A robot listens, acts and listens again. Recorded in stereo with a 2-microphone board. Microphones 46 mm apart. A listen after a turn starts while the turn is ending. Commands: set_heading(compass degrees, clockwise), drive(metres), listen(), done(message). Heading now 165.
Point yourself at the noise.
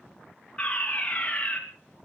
set_heading(140)
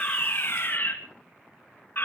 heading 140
set_heading(15)
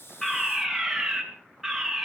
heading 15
done("Facing the fire alarm, 2 to 4 m away.")